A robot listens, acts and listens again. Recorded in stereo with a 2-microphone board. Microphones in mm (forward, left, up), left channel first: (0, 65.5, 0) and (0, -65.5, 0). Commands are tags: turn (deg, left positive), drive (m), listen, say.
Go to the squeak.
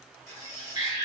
<turn deg="20"/>
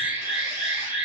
<listen/>
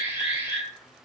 <listen/>
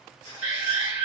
<turn deg="140"/>
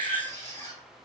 <turn deg="35"/>
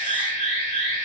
<listen/>
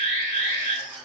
<drive m="1.0"/>
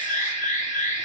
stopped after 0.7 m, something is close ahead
<listen/>
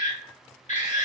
<listen/>
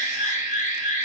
<say>Facing where the squeak came from. I can't hear it now. I did not reach it.</say>